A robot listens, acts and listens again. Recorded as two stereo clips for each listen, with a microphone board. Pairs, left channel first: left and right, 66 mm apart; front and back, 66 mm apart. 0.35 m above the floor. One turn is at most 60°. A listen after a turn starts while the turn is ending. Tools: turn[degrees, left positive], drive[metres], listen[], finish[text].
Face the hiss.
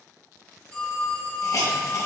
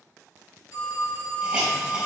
Thought: The hiss: 110° left.
Action: turn[60]
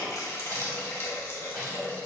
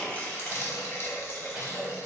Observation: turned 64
Thought: The hiss is now 45° left.
Action: turn[45]
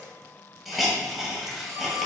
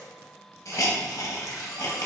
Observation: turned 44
Action: finish[Facing the hiss.]